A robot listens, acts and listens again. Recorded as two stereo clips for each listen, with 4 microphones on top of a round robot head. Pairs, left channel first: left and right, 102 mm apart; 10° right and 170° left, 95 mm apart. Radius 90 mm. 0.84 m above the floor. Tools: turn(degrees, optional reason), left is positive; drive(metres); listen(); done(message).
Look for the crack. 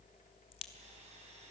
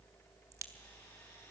turn(degrees=115, reason="The crack: 115° left.")
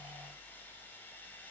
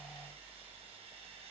done("Facing where the crack came from. I can't hear it now.")